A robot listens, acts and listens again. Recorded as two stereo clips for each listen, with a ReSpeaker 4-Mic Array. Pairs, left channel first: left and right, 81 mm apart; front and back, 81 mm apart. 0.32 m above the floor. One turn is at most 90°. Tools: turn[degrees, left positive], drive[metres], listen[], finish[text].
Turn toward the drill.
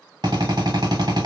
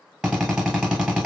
Thought: The drill: 100° right.
Action: turn[-90]
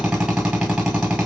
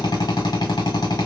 Thought: The drill is now 15° right.
Action: turn[-15]
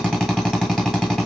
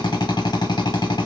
Action: finish[Facing the drill, 1 to 2 m away.]